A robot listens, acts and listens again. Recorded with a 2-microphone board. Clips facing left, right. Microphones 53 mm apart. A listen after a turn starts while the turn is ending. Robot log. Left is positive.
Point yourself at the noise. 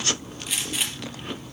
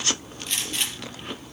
cmd yaw +30
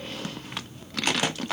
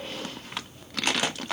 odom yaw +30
cmd idle
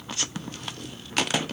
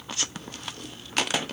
end: I heard a gunshot, but can't make it out now. It was about 25° right or 145° left.